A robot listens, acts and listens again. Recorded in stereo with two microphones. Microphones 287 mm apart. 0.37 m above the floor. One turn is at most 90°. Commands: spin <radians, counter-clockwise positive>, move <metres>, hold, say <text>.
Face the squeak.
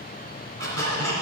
spin -0.96
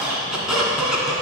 say Facing the squeak.